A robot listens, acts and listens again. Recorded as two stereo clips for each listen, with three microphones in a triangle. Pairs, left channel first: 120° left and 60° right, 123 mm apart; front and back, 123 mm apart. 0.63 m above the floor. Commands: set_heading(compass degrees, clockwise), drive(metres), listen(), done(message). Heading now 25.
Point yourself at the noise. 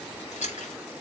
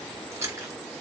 set_heading(270)
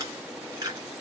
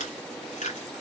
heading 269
done("Found it: chewing, straight ahead, 2 to 4 m away.")